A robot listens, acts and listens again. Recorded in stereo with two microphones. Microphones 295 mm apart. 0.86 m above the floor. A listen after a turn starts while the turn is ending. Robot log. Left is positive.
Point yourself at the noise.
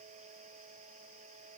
cmd idle
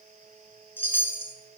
cmd yaw +30
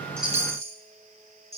note: So it is at 20° right.
cmd yaw -20
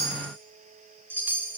end: Facing the chime, 1 to 2 m away.